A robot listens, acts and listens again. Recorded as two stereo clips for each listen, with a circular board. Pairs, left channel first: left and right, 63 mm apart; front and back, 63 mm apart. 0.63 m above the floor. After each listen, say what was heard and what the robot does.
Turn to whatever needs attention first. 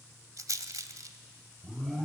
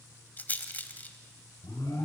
Facing the alarm, 2 to 4 m away.